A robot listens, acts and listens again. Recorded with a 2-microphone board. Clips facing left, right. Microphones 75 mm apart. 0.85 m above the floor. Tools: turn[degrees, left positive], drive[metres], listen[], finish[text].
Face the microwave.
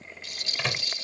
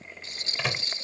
Action: turn[-30]
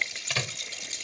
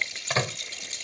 Thought: So it is at 145° right.
Action: turn[-145]
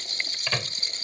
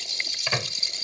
Thought: The microwave is now 10° right.
Action: turn[-10]
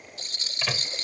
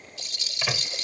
Action: finish[Found it: a microwave, straight ahead.]